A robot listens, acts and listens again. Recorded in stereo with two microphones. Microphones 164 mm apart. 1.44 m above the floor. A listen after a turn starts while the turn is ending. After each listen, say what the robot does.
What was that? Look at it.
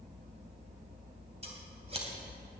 Turn 40° right.
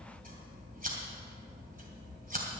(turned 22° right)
Turn 115° right.
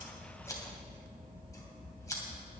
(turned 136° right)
Turn 20° left.
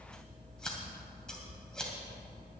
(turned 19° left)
Found it: scissors, straight ahead, 2 to 4 m away.